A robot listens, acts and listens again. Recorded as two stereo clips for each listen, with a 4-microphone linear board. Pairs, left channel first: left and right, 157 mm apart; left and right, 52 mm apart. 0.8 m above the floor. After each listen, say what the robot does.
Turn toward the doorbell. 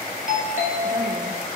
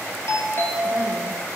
Turn 55° left.
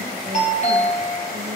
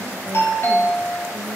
Turn 55° left.
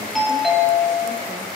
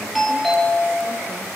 Found it: a doorbell, straight ahead.